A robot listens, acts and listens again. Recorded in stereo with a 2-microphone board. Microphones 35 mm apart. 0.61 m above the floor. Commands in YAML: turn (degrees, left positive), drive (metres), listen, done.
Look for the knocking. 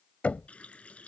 turn: 40
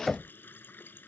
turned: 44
done: "Facing the knocking."